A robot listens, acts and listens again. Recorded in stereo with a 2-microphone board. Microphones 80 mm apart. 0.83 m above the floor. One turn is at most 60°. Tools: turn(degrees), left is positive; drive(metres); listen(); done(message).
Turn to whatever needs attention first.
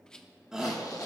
turn(degrees=-30)
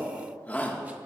turn(degrees=20)
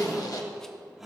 done("Found it: a shout, straight ahead, 1 to 2 m away.")